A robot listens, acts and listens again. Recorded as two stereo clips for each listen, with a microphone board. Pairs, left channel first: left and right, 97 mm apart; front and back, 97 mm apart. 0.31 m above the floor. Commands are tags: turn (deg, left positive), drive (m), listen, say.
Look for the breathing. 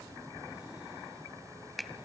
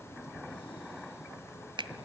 <listen/>
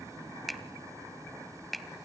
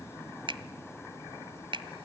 <listen/>
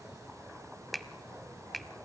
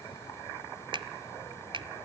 <say>I can't make out breathing, only a finger snap.</say>